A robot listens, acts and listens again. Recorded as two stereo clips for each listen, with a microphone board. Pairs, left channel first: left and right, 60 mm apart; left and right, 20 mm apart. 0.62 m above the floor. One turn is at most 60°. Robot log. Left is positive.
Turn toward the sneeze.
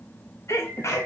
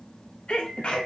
note: The sneeze: about 55° left or 125° left.
cmd yaw +55
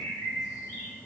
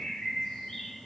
cmd idle
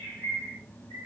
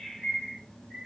end: I heard a sneeze, but can't make it out now. It was about straight ahead or 70° left.